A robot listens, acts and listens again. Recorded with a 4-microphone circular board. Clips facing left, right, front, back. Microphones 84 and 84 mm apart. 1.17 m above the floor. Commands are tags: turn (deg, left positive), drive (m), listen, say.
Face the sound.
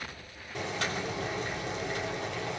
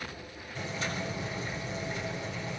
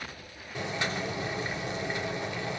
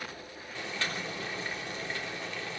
<turn deg="70"/>
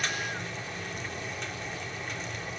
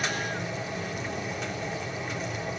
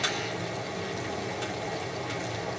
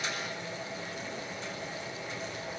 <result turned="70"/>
<say>Found it: boiling, straight ahead.</say>